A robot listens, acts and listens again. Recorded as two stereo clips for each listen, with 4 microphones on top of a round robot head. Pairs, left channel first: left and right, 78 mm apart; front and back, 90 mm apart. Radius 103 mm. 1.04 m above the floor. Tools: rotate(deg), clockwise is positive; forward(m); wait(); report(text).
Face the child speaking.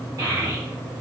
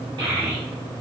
rotate(145)
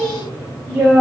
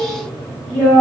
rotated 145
rotate(45)
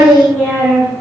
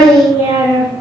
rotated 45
rotate(20)
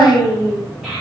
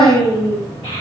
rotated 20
rotate(10)
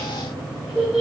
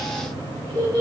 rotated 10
report("Facing the child speaking.")